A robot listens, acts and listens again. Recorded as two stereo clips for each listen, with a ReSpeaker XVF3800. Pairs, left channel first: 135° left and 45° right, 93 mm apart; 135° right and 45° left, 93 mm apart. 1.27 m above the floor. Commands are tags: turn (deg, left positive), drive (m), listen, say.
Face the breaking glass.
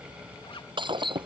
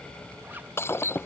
<turn deg="-70"/>
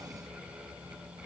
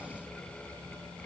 <say>I heard breaking glass from this way, but can't make it out now.</say>